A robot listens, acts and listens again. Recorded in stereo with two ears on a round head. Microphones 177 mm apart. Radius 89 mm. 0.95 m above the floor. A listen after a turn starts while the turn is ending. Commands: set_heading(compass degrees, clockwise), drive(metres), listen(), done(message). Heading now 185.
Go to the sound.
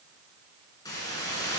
set_heading(165)
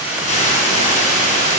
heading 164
set_heading(24)
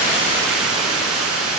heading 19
drive(1.0)
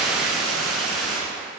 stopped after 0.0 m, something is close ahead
done("Something is in my way. I am facing the hiss but have not reached it.")